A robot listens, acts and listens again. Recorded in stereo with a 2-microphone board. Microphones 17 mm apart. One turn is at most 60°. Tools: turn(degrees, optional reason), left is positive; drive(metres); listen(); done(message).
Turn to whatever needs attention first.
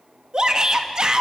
turn(degrees=-40, reason="The shout: about 40° right or 140° right.")
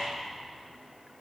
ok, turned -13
listen()
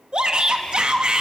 turn(degrees=-60, reason="So it is at 125° right.")
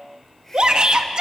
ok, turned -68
turn(degrees=-55, reason="The shout is now 55° right.")
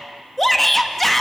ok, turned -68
turn(degrees=10, reason="The shout is now 10° left.")
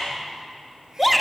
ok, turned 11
done("Found it: a shout, straight ahead, 2 to 4 m away.")